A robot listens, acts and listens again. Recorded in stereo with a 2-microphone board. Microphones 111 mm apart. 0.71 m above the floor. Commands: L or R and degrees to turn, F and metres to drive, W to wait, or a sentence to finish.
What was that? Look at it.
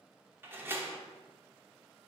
R20
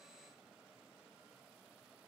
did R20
W
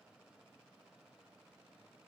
I heard a door slam, but can't make it out now. It was about straight ahead or 140° right.